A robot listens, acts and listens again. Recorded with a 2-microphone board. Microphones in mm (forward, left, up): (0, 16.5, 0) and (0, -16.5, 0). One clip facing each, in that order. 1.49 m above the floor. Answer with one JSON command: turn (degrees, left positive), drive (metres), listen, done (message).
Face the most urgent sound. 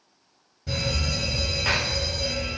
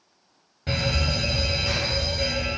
{"turn": -55}
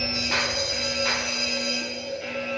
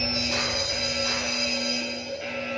{"turn": -10}
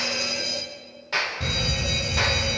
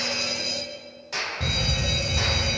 {"done": "Facing the fire alarm."}